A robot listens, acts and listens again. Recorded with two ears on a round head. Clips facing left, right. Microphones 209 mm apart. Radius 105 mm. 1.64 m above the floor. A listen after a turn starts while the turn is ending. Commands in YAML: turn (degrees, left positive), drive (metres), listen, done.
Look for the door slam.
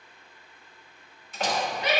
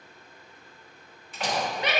turn: 35
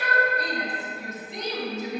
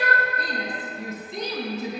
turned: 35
listen: true
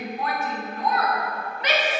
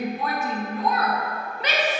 done: "I heard a door slam, but can't make it out now. It was about straight ahead or 110° left."